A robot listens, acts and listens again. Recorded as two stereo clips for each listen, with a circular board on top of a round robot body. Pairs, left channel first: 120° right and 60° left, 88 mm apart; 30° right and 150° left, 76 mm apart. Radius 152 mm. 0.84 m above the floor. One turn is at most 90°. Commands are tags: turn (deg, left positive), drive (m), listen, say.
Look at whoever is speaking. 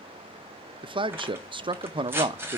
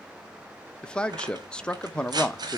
<turn deg="45"/>
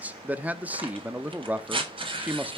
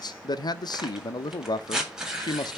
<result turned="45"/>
<turn deg="-10"/>
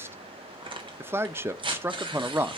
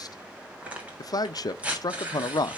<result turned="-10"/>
<say>Found it: a man speaking, straight ahead.</say>